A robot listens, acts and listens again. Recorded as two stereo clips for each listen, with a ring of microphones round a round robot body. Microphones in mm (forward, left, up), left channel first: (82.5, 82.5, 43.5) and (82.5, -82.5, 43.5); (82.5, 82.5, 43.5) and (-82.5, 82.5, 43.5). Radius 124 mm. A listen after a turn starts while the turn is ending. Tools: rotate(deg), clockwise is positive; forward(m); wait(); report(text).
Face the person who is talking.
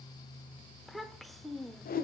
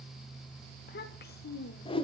report("Facing the child speaking.")